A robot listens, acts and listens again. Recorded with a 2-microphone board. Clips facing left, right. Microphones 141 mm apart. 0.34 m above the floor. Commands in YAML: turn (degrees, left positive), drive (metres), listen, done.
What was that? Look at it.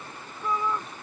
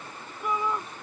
turn: -30
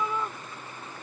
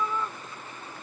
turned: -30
turn: 15
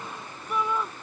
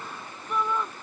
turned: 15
done: "Facing the shout."